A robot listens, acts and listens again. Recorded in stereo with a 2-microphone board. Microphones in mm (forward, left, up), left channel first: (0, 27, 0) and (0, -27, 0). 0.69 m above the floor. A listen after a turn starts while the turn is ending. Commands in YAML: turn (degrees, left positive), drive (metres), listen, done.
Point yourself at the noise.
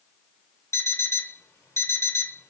turn: 65
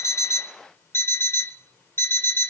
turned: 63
turn: 55
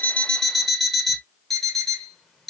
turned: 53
done: "Facing the alarm clock."